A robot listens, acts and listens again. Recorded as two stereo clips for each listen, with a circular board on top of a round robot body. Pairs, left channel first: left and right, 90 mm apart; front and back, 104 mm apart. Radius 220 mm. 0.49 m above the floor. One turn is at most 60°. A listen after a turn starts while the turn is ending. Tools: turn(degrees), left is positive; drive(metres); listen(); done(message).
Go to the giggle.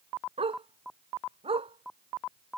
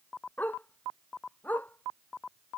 listen()
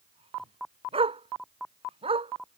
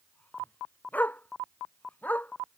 listen()
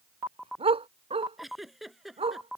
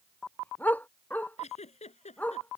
drive(metres=1.0)
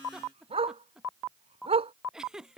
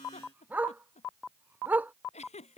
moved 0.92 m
turn(degrees=-10)
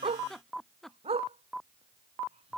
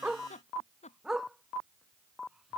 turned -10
drive(metres=1.0)
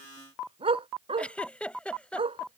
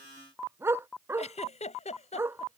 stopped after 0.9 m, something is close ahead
turn(degrees=10)
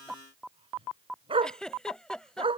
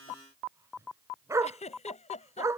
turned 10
done("I am next to the giggle.")